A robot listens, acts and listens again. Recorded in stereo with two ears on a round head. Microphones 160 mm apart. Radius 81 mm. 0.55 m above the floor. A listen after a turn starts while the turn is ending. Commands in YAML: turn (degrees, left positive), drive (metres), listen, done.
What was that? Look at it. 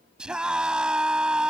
turn: -30
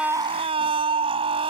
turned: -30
turn: -145
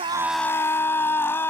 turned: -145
turn: 15
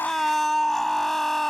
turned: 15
done: "Facing the scream."